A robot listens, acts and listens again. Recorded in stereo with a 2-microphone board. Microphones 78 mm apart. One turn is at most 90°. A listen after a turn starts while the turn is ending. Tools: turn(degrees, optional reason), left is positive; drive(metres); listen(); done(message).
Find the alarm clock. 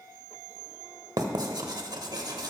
listen()
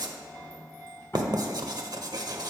listen()
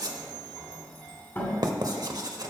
done("I can't make out an alarm clock, only writing and a sliding door.")